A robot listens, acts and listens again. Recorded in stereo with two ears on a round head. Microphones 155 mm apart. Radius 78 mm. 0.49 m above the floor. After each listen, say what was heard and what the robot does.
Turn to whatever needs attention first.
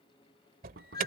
The alarm: about 55° right or 125° right. Turn 55° right.
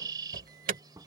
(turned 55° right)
So it is at 60° right. Turn 60° right.
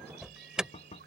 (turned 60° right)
Facing the alarm.